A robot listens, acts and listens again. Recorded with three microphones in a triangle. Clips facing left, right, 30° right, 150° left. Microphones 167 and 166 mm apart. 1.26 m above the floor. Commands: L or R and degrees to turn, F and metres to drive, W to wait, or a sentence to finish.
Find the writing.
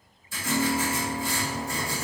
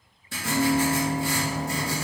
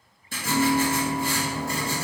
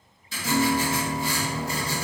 R70
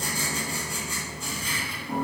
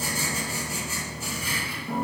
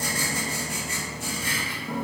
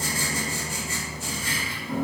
Facing the writing.